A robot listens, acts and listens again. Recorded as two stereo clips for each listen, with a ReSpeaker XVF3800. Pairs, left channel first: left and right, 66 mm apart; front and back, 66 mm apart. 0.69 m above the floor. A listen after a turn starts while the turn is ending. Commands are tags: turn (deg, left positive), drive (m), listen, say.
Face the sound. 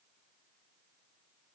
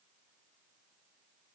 <listen/>
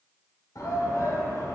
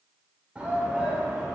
<turn deg="105"/>
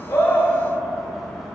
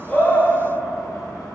<listen/>
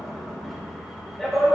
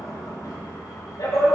<say>Found it: a shout, straight ahead, 2 to 4 m away.</say>